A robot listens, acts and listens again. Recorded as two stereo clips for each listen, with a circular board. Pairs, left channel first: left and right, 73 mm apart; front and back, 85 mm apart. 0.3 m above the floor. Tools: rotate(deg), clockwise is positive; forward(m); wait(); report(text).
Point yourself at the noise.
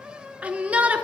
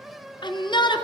rotate(20)
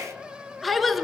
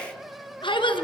report("Found it: a shout, straight ahead, 2 to 4 m away.")